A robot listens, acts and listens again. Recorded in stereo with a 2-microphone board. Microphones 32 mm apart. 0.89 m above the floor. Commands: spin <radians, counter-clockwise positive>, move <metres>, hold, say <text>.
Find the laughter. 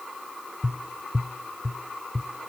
hold
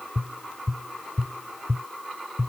hold
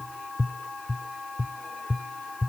say I can't make out laughter, only tapping.